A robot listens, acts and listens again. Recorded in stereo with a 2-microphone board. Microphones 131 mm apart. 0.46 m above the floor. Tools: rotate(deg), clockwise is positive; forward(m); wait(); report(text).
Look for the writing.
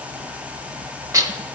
wait()
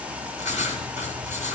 rotate(-70)
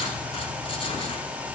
wait()
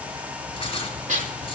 rotate(-40)
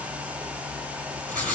report("Found it: writing, straight ahead.")